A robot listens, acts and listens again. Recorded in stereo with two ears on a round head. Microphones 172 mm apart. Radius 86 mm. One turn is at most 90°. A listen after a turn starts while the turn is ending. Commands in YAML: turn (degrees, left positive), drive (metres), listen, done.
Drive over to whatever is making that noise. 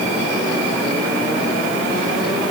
listen: true
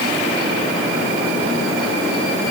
listen: true
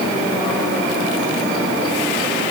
done: "I can't make out anything to turn to."